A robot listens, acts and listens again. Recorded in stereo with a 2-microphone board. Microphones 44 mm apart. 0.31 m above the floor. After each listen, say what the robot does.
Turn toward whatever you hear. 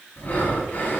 Turn 40° left.
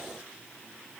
Keep listening.
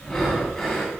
Found it: breathing, straight ahead.